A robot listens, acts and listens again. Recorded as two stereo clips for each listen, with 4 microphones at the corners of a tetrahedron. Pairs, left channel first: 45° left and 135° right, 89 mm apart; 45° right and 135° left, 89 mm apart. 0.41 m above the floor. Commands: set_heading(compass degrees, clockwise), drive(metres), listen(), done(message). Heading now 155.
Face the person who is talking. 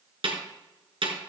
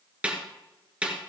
listen()
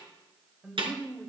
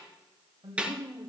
set_heading(20)
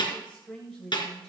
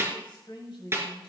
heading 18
set_heading(73)
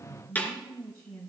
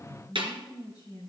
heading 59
set_heading(84)
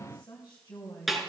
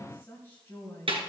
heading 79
done("Facing the woman speaking.")